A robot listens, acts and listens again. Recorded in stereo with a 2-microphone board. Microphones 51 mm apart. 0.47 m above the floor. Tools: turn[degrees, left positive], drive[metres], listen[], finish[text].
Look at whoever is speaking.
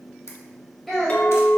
Action: turn[30]
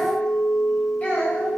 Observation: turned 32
Thought: So it is at 150° left.
Action: turn[150]
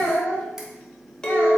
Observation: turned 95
Thought: The child speaking is now 50° left.
Action: turn[50]
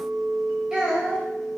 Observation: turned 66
Thought: The child speaking is now 15° right.
Action: turn[-15]
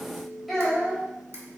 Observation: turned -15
Action: finish[Facing the child speaking, 1 to 2 m away.]